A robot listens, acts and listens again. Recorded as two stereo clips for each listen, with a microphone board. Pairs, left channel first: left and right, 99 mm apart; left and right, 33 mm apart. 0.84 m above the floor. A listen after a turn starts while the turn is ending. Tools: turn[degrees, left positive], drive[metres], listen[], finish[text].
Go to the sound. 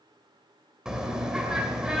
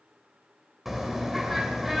Action: turn[-30]
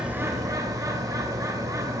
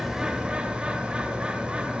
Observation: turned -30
Thought: So it is at 145° right.
Action: turn[-145]
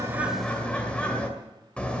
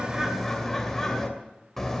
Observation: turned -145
Thought: The bird is now 10° left.
Action: turn[10]
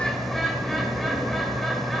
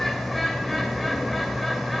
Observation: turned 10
Action: drive[1.0]
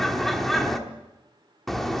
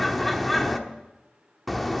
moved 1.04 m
Action: drive[1.0]
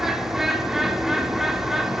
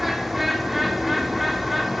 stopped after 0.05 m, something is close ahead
Action: finish[I am next to the bird.]